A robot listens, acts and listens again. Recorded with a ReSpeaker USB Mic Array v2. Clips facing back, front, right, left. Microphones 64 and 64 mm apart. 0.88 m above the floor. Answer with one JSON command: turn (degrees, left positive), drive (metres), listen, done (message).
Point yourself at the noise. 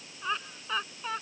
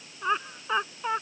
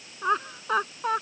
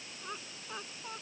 {"turn": -70}
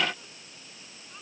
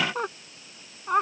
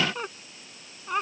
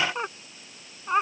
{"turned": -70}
{"turn": 25}
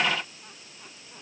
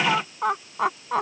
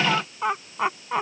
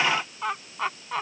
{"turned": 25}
{"turn": -10}
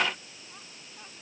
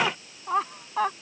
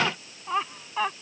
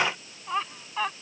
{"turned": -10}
{"done": "Facing the laughter."}